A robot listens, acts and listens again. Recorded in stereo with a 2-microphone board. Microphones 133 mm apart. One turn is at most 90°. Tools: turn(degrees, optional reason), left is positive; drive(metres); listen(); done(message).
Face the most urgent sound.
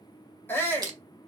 turn(degrees=15, reason="The shout: about 15° left or 165° left.")
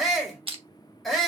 done("Found it: a shout, straight ahead.")